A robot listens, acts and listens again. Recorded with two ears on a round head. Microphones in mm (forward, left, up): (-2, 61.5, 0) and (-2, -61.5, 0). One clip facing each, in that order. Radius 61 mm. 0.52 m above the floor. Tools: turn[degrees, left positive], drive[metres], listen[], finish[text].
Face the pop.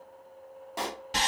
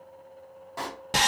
Thought: The pop: about 25° left or 155° left.
Action: turn[25]
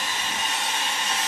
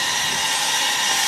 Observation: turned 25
Action: listen[]
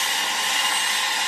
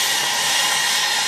Action: finish[I heard a pop, but can't make it out now. It was about straight ahead or 130° left.]